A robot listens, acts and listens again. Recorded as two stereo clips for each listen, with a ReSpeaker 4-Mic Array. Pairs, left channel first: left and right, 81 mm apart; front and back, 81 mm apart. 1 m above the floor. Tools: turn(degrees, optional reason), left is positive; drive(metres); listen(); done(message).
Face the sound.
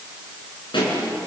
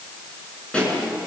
turn(degrees=75, reason="The pop: 75° left.")
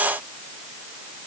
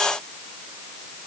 done("Facing where the pop came from. I can't hear it now.")